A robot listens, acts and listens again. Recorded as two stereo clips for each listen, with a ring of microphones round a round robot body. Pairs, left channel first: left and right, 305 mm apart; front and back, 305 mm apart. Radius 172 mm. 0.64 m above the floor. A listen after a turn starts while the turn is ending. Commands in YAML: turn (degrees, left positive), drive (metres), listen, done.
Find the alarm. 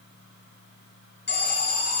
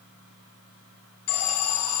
turn: 35
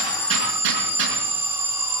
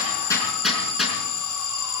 turn: -10
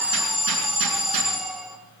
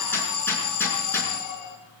done: "Facing the alarm."